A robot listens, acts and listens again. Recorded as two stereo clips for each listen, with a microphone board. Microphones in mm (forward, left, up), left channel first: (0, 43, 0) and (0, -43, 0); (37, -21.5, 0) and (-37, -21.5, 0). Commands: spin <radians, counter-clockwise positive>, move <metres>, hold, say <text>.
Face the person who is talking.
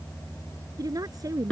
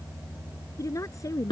spin -0.79
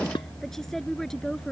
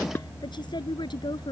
hold
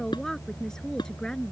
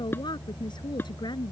hold
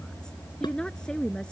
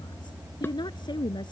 spin 0.17
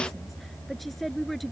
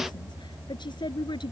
say Found it: a woman speaking, straight ahead.